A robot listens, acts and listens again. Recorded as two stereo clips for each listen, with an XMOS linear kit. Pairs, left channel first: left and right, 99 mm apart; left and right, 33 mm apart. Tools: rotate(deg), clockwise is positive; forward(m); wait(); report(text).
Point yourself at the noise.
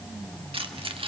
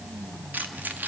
rotate(70)
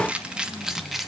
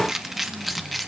report("Facing the keys jangling.")